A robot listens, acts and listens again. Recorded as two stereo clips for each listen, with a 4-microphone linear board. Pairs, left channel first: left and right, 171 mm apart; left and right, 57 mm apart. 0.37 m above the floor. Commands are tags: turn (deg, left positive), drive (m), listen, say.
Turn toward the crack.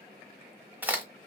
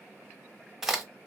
<turn deg="-30"/>
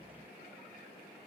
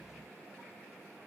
<listen/>
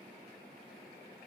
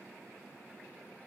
<say>I heard a crack, but can't make it out now. It was about 20° left or 140° right.</say>